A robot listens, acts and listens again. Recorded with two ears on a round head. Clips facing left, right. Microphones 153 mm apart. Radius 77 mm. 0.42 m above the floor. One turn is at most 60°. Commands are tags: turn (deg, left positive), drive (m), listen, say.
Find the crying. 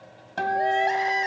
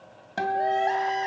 <turn deg="15"/>
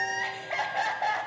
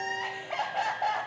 <say>Found it: crying, straight ahead, 1 to 2 m away.</say>